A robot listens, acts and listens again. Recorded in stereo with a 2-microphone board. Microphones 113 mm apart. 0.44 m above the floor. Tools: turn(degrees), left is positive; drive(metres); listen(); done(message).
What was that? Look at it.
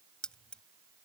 turn(degrees=30)
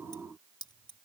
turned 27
turn(degrees=135)
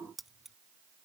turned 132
done("Found it: keys jangling, straight ahead.")